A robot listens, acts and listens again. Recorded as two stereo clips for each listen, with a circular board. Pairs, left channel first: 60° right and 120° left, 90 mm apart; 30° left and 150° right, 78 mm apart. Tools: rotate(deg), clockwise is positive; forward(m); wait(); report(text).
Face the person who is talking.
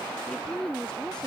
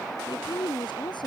rotate(-20)
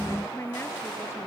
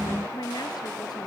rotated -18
report("Found it: a woman speaking, straight ahead.")